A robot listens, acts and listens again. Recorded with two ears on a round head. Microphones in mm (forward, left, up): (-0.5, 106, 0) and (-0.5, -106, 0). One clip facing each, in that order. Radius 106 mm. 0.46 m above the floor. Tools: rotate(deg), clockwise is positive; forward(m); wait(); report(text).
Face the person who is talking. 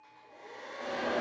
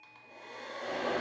wait()
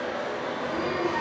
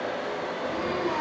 rotate(-25)
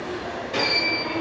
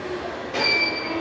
rotate(-30)
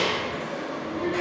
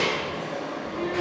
rotate(-130)
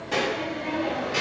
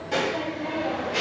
report("Facing the child speaking.")